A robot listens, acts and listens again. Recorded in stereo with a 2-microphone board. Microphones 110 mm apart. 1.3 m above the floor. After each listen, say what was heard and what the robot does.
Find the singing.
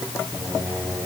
The singing: about 15° right or 165° right. Turn 15° right.
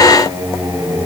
The singing: about 35° right or 145° right. Turn 35° right.
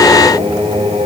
So it is at 110° right. Turn 110° right.
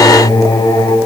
The singing is now 40° left. Turn 40° left.
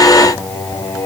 The singing is now 25° left. Turn 25° left.
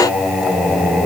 Facing the singing.